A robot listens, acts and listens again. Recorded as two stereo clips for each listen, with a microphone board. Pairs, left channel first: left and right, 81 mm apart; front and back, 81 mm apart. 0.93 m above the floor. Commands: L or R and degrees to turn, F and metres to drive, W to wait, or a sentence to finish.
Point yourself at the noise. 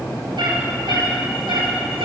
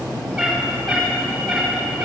R80
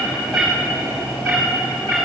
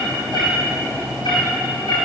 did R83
L15
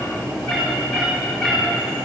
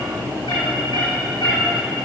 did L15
Facing the cat meowing, over 4 m away.